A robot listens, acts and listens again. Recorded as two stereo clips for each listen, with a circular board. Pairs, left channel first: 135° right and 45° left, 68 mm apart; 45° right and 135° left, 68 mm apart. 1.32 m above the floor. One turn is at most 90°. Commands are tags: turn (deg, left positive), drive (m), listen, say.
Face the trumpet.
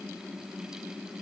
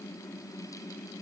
<listen/>
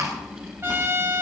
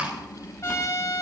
<say>Facing the trumpet, over 4 m away.</say>